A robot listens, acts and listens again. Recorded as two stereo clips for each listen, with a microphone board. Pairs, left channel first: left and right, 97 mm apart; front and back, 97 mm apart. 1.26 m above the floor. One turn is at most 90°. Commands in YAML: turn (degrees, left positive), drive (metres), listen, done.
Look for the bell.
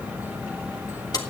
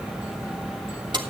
listen: true
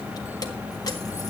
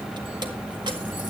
listen: true
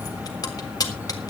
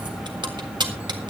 done: "I can't make out a bell, only keys jangling."